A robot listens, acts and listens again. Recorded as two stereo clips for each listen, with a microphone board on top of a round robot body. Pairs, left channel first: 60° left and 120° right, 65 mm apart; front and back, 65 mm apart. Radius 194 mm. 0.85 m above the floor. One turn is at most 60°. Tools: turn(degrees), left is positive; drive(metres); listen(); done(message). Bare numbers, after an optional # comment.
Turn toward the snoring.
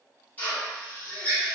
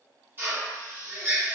listen()
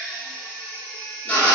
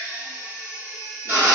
listen()
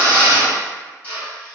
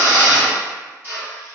done("I can't make out snoring to turn to.")